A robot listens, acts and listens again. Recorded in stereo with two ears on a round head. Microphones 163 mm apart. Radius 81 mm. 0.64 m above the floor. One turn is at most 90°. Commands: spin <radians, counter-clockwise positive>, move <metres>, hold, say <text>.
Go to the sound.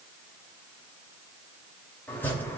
spin 0.52
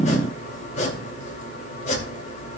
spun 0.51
spin 1.57
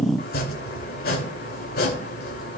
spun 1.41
spin 0.96
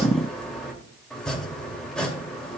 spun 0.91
move 1.0
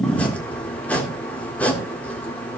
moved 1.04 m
spin 0.17
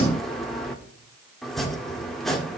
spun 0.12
move 1.0
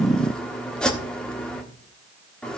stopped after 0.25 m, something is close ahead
say Arrived at the chopping, straight ahead.